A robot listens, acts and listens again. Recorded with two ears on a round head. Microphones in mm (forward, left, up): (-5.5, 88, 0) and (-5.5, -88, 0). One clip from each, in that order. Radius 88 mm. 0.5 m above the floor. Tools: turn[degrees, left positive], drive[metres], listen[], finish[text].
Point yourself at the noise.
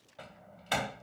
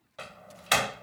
Thought: The door slam: about 50° right or 130° right.
Action: turn[-50]
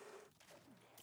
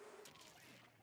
Action: listen[]
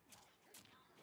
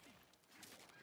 Action: finish[I heard a door slam, but can't make it out now. It was about straight ahead or 80° right.]